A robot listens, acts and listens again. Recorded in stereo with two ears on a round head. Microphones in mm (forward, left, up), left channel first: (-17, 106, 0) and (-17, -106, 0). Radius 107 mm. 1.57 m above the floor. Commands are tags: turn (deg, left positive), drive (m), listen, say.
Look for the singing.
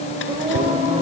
<turn deg="-35"/>
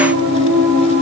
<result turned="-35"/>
<turn deg="-110"/>
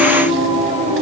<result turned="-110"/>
<turn deg="-25"/>
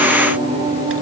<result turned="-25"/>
<turn deg="-20"/>
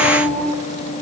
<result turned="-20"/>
<say>Facing the singing, over 4 m away.</say>